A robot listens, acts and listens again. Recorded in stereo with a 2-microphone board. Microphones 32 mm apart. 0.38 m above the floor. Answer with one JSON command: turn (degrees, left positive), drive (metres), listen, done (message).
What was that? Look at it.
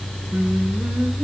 {"turn": -90}
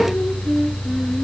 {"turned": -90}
{"done": "Facing the singing, 2 to 4 m away."}